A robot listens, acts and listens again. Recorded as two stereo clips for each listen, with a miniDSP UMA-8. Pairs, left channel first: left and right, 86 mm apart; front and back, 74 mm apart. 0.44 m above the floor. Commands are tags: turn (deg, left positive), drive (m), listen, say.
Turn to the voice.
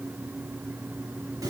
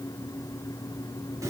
<listen/>
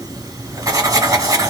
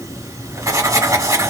<listen/>
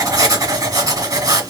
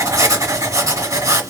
<say>I can't make out anyone speaking to turn to.</say>